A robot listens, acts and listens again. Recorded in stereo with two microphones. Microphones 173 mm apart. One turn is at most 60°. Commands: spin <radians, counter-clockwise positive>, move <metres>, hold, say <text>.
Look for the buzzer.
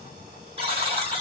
spin -0.61
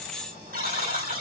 spin -1.05
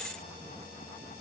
spin -0.87
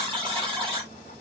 spin -0.61
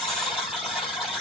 say Facing the buzzer, 2 to 4 m away.